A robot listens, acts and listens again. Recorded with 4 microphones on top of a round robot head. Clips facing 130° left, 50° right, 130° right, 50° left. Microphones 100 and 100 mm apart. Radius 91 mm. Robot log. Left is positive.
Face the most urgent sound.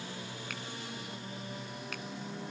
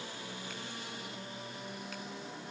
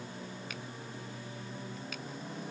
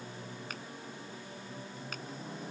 cmd idle
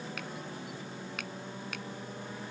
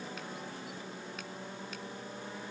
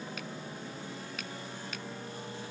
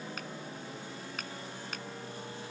cmd idle
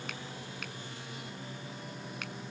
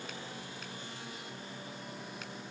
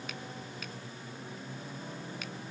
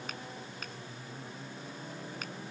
end: I can't make out anything urgent to turn to.